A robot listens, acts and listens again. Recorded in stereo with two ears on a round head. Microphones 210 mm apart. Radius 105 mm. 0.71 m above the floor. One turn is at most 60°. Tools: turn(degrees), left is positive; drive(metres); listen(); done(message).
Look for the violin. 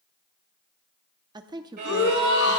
turn(degrees=-40)
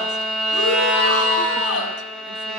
done("Facing the violin.")